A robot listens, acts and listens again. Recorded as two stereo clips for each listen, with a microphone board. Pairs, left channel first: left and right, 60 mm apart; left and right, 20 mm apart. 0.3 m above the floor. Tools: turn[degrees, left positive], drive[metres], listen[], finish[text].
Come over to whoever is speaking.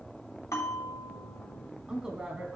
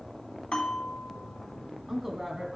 Action: turn[-30]
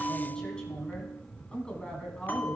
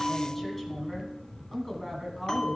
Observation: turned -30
Thought: So it is at 15° left.
Action: turn[15]
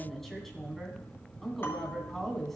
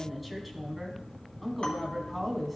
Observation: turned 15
Action: drive[1.0]
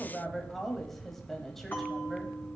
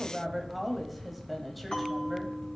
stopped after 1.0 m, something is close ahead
Action: finish[I am next to the woman speaking.]